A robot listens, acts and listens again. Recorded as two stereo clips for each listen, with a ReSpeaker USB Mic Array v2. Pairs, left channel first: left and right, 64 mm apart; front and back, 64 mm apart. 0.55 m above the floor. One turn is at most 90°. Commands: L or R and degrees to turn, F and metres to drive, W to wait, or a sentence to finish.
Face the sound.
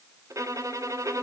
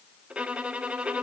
R90
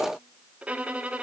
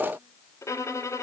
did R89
R25
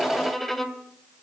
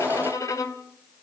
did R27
Facing the violin, 2 to 4 m away.